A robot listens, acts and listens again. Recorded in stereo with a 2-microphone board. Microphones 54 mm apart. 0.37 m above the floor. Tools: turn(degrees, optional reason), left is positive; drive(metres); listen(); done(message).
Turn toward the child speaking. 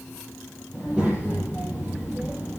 turn(degrees=-20, reason="The child speaking: about 20° right or 160° right.")
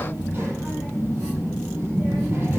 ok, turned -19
turn(degrees=-140, reason="So it is at 140° right.")
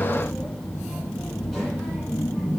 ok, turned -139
done("Found it: a child speaking, straight ahead.")